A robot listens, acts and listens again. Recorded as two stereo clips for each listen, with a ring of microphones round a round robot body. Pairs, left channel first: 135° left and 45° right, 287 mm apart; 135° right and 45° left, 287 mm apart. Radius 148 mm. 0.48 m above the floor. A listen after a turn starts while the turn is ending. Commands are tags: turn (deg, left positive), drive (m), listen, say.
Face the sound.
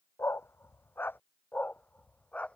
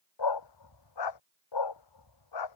<turn deg="-140"/>
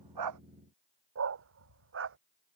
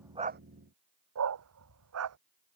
<say>Facing the dog barking.</say>